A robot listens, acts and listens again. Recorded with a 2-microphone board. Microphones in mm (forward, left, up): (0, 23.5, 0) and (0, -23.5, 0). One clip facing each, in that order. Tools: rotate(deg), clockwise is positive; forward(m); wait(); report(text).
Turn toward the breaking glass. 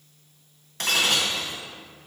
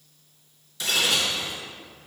rotate(-55)
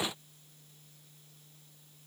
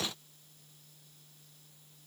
wait()
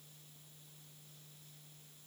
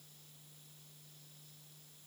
report("I heard breaking glass, but can't make it out now. It was about straight ahead or 70° left.")